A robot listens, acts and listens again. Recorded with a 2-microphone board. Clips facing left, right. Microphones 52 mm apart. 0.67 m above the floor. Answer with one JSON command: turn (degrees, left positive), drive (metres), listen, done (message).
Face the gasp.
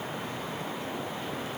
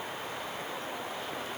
{"listen": true}
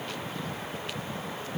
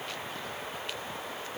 {"listen": true}
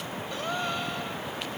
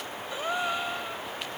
{"turn": -30}
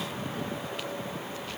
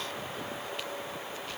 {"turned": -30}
{"listen": true}
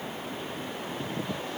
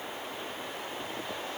{"done": "I heard a gasp, but can't make it out now. It was about 15° left or 135° right."}